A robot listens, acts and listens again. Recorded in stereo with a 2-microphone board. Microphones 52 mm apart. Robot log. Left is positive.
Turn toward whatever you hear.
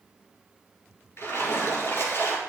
note: The splash: about 60° left or 120° left.
cmd yaw +60
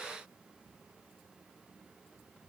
cmd idle
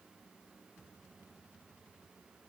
end: I heard a splash, but can't make it out now. It was about straight ahead or 60° left.